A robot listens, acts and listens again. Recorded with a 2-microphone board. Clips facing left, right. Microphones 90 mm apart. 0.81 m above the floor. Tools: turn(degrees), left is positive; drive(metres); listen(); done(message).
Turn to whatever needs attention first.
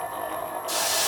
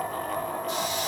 listen()
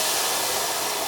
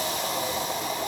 listen()
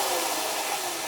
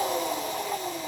done("I can't make out anything urgent to turn to.")